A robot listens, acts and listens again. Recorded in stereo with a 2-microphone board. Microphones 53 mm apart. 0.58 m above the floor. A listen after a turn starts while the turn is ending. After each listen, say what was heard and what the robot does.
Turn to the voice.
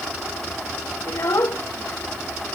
The child speaking: about 55° left or 125° left. Turn 55° left.
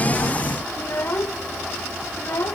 So it is at 60° left. Turn 60° left.
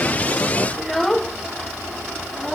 Found it: a child speaking, straight ahead.